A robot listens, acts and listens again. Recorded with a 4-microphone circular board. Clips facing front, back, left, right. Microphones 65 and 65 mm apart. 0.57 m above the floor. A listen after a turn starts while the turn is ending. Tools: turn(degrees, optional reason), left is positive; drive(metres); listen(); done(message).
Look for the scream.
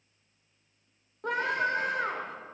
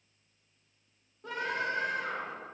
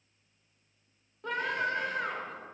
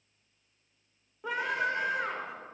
turn(degrees=-10, reason="The scream: 10° right.")
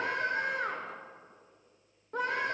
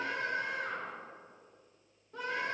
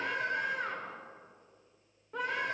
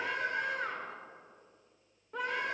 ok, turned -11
done("Found it: a scream, straight ahead.")